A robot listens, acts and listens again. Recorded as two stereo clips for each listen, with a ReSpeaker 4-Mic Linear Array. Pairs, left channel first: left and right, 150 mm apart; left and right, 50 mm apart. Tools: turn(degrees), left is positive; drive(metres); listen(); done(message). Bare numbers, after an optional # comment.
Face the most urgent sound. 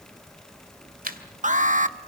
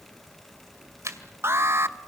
# The alarm: about 55° right or 125° right.
turn(-55)
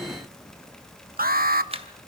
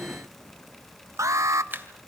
# So it is at 75° right.
turn(-75)
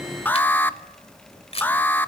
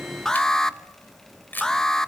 # The alarm is now 10° left.
turn(10)
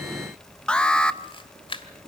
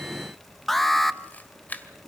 done("Found it: an alarm, straight ahead, under 1 m away.")